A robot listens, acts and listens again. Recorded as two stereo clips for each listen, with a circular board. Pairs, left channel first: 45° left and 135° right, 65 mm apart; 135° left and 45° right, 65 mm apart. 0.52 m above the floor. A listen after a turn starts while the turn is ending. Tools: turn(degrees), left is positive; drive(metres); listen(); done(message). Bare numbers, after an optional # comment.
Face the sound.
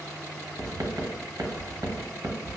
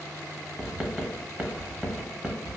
# The writing: 115° right.
turn(-115)
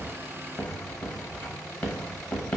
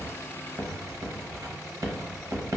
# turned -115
# The writing is now 15° right.
turn(-15)
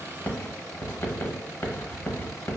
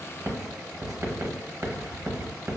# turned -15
done("Found it: writing, straight ahead, under 1 m away.")